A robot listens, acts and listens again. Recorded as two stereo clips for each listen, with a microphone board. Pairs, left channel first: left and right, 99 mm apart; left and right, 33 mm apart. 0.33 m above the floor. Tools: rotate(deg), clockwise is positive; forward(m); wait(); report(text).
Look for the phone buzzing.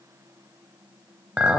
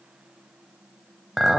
wait()
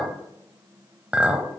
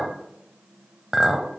wait()
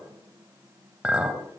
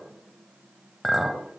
report("I can't make out a phone buzzing, only a clink.")